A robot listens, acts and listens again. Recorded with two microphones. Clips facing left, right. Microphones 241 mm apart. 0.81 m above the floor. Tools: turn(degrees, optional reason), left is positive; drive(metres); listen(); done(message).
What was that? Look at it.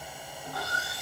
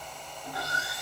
turn(degrees=-20, reason="The sawing: about 20° right or 160° right.")
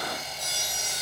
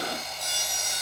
done("Facing the sawing, 1 to 2 m away.")